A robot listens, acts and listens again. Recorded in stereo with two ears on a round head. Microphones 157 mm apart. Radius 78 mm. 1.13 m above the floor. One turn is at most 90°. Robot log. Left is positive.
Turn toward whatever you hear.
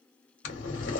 cmd yaw +90
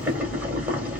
note: So it is at 10° right.
cmd yaw -10
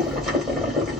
end: Facing the boiling.